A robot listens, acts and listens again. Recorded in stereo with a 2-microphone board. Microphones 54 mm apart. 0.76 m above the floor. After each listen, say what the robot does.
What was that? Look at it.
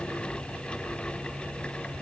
Keep listening.
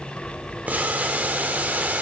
Turn 30° right.
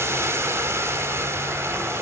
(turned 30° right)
Turn 120° right.
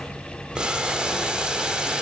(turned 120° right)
Turn 20° right.
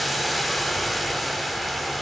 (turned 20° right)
Found it: boiling, straight ahead.